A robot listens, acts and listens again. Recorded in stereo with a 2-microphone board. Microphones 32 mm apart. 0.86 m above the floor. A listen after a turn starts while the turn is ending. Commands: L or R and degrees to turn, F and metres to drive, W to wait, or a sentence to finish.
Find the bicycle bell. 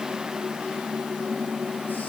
W
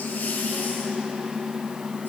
W
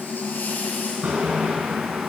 R55
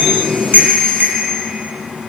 R70
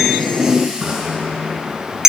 R15
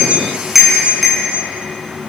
Facing the bicycle bell, over 4 m away.